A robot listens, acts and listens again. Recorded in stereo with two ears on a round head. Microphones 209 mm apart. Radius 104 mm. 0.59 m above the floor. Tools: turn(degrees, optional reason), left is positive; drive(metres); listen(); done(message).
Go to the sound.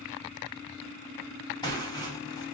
turn(degrees=20, reason="The tearing paper: about 20° left or 160° left.")
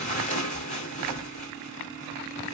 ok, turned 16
turn(degrees=150, reason="So it is at 150° left.")
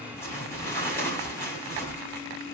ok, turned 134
turn(degrees=10, reason="The tearing paper is now 10° left.")
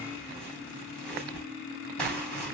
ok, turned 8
drive(metres=1.0)
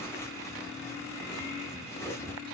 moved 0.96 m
turn(degrees=15, reason="The tearing paper is now 15° left.")
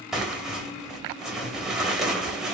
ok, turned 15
drive(metres=1.0)
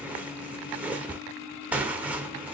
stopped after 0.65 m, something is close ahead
done("I am next to the tearing paper.")